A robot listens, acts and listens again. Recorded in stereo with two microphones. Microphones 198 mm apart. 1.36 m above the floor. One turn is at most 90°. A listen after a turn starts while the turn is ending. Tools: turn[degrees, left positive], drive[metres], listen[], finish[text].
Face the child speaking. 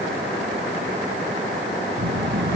Thought: The child speaking: about 65° right or 115° right.
Action: turn[-65]
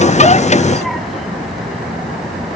Action: finish[Found it: a child speaking, straight ahead.]